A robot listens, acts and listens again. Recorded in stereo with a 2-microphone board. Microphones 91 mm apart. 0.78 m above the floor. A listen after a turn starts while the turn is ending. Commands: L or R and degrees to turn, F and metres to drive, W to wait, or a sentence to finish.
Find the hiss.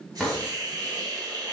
R40
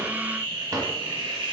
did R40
R90
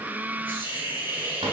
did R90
R20
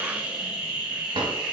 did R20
R10
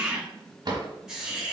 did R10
Found it: a hiss, straight ahead.